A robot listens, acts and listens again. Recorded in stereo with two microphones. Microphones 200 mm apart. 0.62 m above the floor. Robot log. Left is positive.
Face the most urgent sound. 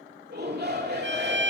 note: The shout: about 55° right or 125° right.
cmd yaw -55
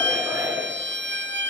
note: So it is at 15° right.
cmd yaw -15
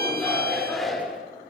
end: Facing the shout, 2 to 4 m away.